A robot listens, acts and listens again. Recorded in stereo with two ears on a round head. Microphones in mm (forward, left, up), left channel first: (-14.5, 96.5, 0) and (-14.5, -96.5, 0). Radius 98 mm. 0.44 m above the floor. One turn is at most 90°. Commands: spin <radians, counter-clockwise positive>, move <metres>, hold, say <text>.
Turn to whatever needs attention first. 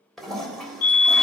spin 0.70
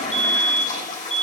say Facing the fire alarm, 2 to 4 m away.